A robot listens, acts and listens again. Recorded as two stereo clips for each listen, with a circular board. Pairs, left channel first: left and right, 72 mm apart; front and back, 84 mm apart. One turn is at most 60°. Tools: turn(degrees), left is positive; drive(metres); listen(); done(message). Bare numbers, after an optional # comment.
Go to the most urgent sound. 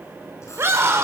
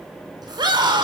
# The scream: 145° right.
turn(-60)
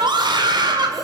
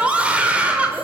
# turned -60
# The scream is now 105° right.
turn(-60)
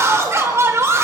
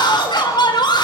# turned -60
# The scream is now 35° right.
turn(-35)
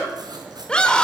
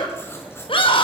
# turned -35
# The scream is now 10° left.
turn(10)
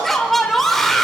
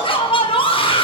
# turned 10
drive(1.0)
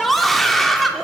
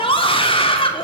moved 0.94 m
drive(1.0)
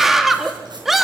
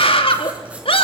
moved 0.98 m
drive(1.0)
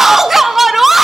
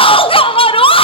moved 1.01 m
drive(1.0)
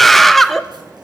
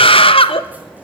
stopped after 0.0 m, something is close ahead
done("I am next to the scream.")